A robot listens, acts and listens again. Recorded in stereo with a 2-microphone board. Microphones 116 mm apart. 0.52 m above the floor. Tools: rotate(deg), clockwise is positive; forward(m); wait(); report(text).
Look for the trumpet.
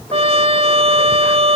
rotate(60)
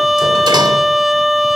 report("Facing the trumpet.")